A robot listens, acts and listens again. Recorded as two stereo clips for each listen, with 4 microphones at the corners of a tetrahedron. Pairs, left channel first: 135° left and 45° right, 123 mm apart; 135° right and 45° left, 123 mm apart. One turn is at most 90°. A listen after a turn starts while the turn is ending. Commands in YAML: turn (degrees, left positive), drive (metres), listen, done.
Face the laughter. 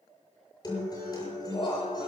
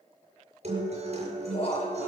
turn: -90
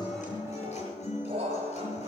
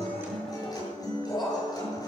turn: -80
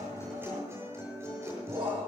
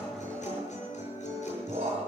done: "Facing the laughter, over 4 m away."